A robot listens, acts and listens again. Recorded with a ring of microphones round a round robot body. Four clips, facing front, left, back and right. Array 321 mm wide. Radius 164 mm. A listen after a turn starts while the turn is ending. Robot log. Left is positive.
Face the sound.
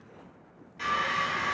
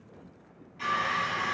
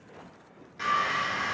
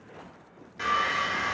note: The sawing: 110° right.
cmd yaw -110
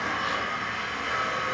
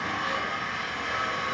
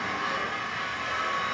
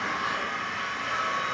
note: The sawing is now 15° left.
cmd yaw +15
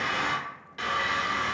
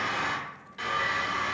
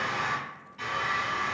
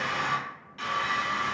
end: Facing the sawing.